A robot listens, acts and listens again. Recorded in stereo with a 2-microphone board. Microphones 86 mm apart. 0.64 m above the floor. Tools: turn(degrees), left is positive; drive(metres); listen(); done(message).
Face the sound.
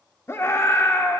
turn(degrees=35)
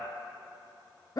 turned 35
turn(degrees=100)
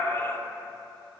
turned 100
turn(degrees=40)
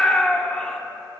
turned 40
turn(degrees=15)
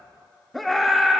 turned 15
done("Found it: a scream, straight ahead, 1 to 2 m away.")